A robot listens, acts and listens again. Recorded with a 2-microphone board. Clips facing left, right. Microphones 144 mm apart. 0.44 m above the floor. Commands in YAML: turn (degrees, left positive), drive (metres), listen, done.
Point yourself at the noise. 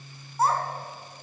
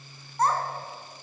turn: 30
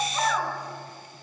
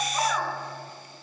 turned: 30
turn: -10
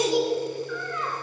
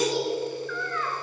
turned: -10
turn: 20
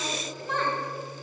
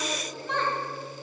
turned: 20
done: "Found it: a child speaking, straight ahead, over 4 m away."